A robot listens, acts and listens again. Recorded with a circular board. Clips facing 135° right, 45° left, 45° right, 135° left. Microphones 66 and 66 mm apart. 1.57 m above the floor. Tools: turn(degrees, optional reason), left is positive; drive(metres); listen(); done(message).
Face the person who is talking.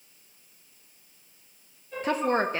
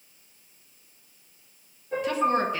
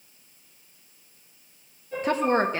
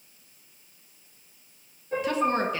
turn(degrees=-95, reason="The woman speaking: 95° right.")
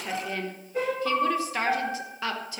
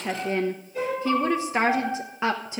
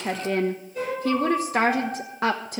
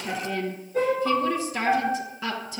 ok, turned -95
turn(degrees=-20, reason="The woman speaking is now 20° right.")
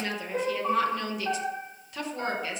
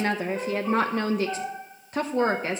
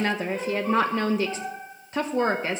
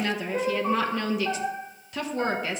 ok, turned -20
done("Found it: a woman speaking, straight ahead.")